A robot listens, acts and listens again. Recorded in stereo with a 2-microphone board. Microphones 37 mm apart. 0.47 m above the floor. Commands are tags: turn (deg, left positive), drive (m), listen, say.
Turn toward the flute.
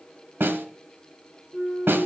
<turn deg="30"/>
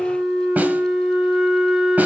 <turn deg="-25"/>
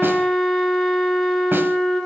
<turn deg="10"/>
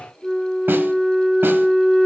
<say>Found it: a flute, straight ahead, 2 to 4 m away.</say>